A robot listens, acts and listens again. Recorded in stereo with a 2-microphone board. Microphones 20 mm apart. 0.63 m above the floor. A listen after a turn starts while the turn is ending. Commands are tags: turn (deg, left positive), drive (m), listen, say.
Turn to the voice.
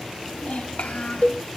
<turn deg="90"/>
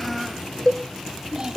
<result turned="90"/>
<turn deg="-35"/>
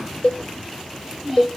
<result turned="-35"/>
<turn deg="-10"/>
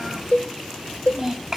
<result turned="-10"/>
<turn deg="-20"/>
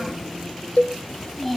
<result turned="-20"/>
<say>Found it: a child speaking, straight ahead, 2 to 4 m away.</say>